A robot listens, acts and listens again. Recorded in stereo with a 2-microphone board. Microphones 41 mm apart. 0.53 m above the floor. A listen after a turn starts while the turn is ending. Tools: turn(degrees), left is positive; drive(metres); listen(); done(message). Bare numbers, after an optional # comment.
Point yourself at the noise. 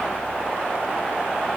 listen()
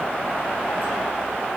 listen()
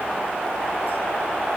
done("I can't make out anything.")